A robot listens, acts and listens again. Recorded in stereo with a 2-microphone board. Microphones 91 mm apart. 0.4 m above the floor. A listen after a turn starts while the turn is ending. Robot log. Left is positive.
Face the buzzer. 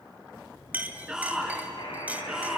note: The buzzer: about 60° left or 120° left.
cmd yaw +60
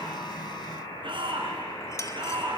note: So it is at 60° left.
cmd yaw +60
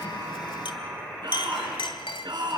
end: Found it: a buzzer, straight ahead.